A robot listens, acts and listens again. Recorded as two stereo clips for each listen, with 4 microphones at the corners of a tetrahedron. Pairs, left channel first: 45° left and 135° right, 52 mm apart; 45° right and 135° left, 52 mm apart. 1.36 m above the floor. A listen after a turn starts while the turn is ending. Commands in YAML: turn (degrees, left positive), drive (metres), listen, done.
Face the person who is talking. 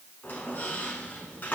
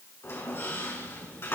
listen: true
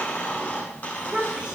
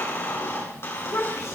turn: -65
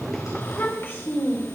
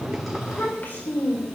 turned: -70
done: "Facing the child speaking."